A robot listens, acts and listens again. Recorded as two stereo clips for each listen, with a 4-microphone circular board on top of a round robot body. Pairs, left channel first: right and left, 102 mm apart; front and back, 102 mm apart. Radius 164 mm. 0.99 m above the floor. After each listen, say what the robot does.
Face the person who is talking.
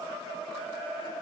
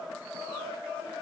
Keep listening.
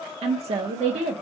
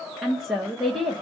Turn 90° left.
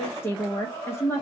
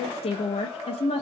Turn 20° right.
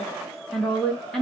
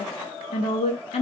Found it: a woman speaking, straight ahead.